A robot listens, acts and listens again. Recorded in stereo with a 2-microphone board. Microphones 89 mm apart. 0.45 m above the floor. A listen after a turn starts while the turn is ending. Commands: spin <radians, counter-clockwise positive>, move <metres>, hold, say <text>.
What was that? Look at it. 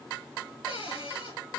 spin 1.57
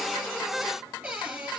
spin -0.17
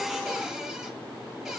hold
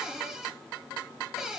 say Facing the cupboard door, over 4 m away.